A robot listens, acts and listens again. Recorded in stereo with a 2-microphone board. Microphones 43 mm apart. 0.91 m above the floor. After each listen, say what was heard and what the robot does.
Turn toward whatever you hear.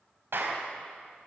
The clap: about 70° right or 110° right. Turn 70° right.
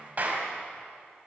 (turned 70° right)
So it is at 40° right. Turn 40° right.
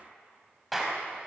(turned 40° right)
Facing the clap.